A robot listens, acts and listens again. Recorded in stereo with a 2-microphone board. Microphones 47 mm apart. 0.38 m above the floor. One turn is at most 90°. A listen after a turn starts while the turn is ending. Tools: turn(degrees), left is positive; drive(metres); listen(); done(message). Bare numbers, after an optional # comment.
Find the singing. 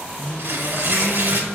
turn(30)
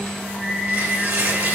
# So it is at 45° right.
turn(-45)
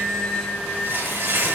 # The singing is now 15° right.
turn(-15)
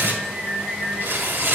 # The singing is now 10° right.
turn(-10)
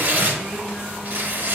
listen()
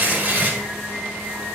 done("Facing the singing, 2 to 4 m away.")